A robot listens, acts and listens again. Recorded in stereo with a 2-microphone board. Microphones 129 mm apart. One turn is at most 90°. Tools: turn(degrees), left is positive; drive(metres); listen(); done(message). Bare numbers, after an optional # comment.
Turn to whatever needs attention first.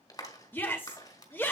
# The shout: about 15° left or 165° left.
turn(15)
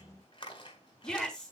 done("Facing the shout.")